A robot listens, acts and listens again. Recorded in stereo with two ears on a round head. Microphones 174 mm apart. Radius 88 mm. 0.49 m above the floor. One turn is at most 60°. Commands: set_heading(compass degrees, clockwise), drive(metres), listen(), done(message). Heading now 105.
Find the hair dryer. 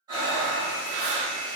set_heading(45)
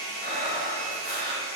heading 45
set_heading(0)
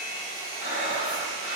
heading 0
set_heading(340)
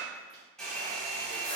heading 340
done("Found it: a hair dryer, straight ahead, 1 to 2 m away.")